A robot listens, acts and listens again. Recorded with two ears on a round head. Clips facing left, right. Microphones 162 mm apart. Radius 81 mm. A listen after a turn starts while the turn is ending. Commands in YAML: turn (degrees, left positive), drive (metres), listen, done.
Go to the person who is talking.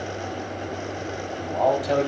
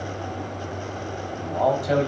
turn: -30
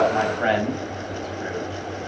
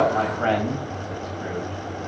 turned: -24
turn: 20
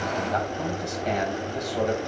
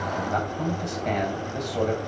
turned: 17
drive: 1.0
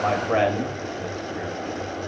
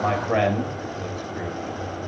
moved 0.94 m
drive: 1.0
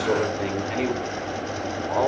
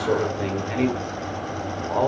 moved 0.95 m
drive: 1.0
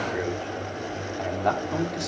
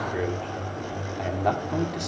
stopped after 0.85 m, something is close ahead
done: "I am next to the man speaking."